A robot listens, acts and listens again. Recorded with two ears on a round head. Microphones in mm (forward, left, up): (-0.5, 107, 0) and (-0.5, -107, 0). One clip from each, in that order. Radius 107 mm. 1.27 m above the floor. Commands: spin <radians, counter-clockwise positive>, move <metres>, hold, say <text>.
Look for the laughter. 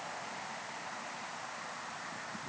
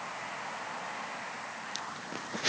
hold
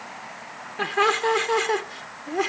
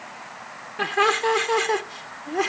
spin -0.52
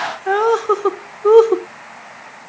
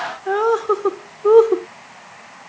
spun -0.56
spin 0.44
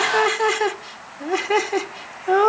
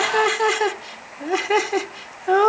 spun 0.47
say Facing the laughter.